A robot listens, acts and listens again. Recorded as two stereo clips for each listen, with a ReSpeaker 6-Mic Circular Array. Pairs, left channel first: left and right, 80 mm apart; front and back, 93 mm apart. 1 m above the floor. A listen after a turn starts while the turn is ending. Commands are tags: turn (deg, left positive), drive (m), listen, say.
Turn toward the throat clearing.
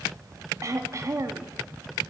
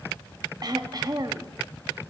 <turn deg="-140"/>
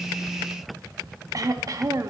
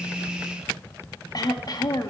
<turn deg="-45"/>
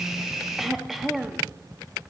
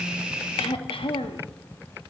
<say>Facing the throat clearing.</say>